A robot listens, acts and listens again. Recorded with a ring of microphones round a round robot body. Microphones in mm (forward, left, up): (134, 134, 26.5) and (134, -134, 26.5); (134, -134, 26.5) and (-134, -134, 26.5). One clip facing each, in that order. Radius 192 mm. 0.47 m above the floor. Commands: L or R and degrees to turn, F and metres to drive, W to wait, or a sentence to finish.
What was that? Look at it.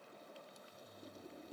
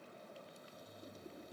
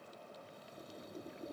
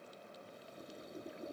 W
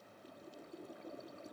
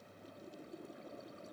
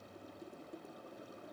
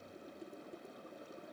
W
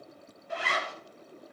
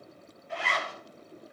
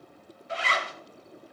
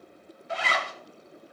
L155
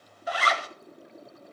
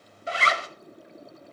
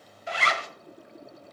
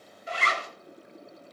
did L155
R25
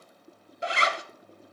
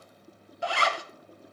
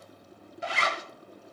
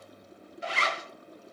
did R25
L20
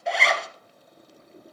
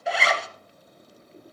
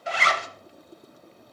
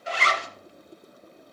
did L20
Facing the zipper.